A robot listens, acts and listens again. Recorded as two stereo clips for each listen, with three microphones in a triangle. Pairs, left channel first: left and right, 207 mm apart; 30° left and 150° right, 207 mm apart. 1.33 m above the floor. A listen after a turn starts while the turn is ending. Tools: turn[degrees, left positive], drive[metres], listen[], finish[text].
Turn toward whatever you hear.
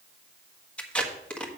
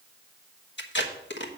Action: finish[Facing the tape being pulled.]